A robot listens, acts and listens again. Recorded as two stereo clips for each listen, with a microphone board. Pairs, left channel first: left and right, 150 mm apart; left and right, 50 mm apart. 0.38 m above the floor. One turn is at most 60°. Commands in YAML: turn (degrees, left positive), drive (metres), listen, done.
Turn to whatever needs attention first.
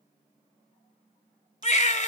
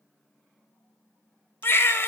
turn: 50
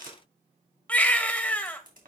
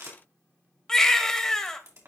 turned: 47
turn: 10
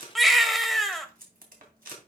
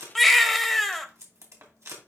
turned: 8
done: "Found it: a baby crying, straight ahead, under 1 m away."